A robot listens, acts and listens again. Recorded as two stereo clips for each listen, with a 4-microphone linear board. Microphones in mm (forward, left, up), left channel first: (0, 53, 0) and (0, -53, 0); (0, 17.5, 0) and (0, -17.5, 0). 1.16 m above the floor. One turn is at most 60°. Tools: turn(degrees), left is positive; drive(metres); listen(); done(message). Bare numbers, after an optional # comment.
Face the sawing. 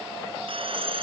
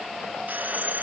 # The sawing: about 55° right or 125° right.
turn(-55)
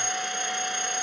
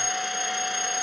done("Found it: sawing, straight ahead.")